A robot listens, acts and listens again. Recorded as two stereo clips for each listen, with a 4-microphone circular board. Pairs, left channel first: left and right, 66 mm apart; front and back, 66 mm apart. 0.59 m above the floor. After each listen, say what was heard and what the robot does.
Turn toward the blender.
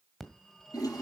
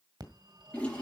Keep listening.
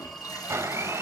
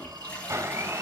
The blender: 135° right. Turn 135° right.
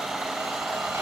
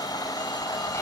Found it: a blender, straight ahead.